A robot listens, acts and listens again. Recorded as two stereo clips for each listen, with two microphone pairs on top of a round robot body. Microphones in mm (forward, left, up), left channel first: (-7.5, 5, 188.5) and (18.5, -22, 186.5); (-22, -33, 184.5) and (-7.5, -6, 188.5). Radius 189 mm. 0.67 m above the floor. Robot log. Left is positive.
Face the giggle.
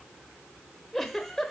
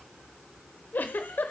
note: The giggle: 145° right.
cmd yaw -145
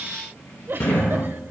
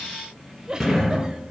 note: The giggle is now 10° right.
cmd yaw -10
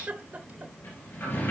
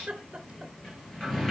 end: Facing the giggle.